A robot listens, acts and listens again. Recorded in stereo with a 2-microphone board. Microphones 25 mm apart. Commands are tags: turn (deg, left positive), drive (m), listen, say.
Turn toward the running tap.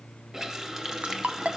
<turn deg="-25"/>
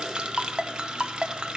<turn deg="-125"/>
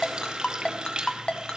<turn deg="-45"/>
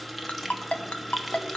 <say>Found it: a running tap, straight ahead, 1 to 2 m away.</say>